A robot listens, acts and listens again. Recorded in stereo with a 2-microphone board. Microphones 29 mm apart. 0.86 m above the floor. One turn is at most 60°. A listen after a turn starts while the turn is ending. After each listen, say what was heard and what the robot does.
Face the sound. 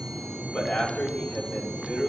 The man speaking: about 70° left or 110° left. Turn 60° left.
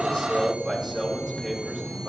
So it is at 10° left. Turn 10° left.
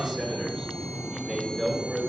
Facing the man speaking, over 4 m away.